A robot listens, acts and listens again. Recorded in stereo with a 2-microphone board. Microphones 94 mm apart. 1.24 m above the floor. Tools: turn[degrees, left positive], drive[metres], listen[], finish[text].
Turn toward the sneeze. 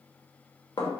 Action: listen[]
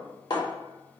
Action: listen[]
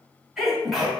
Action: turn[30]
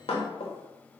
Action: listen[]
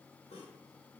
Action: finish[I heard a sneeze, but can't make it out now. It was about 30° right or 150° left.]